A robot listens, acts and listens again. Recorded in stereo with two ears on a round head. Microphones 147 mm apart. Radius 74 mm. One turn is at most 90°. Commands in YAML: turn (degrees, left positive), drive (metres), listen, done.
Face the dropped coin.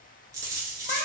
turn: -20
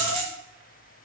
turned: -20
turn: -90
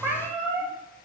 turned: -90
turn: -45
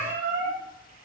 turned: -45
done: "Facing where the dropped coin came from. I can't hear it now."